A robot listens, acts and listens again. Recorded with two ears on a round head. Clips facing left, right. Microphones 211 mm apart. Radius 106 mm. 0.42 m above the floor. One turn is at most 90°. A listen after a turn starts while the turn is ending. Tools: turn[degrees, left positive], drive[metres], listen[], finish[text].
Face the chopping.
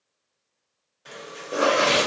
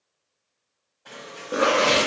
Thought: The chopping: about 25° left or 155° left.
Action: turn[25]
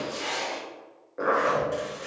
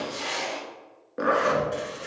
Action: finish[Facing the chopping.]